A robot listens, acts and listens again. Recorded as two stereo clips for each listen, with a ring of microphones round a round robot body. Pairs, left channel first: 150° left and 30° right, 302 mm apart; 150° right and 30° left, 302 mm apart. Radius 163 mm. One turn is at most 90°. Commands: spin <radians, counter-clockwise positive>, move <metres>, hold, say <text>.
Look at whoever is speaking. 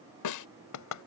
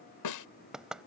hold
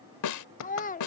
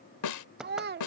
spin 1.48
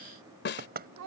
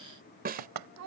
say Facing the child speaking.